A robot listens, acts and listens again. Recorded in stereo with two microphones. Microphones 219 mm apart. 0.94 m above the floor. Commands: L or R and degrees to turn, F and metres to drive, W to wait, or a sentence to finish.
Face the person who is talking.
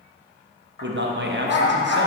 R55
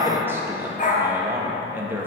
R10
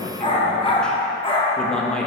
Facing the man speaking, under 1 m away.